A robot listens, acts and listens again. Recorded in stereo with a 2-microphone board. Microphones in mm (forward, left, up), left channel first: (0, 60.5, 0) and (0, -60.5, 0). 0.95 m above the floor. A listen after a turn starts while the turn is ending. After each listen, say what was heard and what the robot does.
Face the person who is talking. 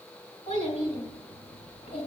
Turn 90° left.
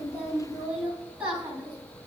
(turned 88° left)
So it is at 10° right. Turn 10° right.
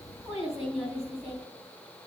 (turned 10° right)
Facing the child speaking.